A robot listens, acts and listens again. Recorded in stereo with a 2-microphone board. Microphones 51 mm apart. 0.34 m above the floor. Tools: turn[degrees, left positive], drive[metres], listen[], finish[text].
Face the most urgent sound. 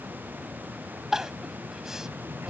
Action: turn[-30]
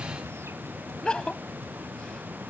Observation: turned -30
Thought: So it is at 20° left.
Action: turn[20]
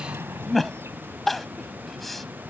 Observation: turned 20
Action: finish[Found it: crying, straight ahead.]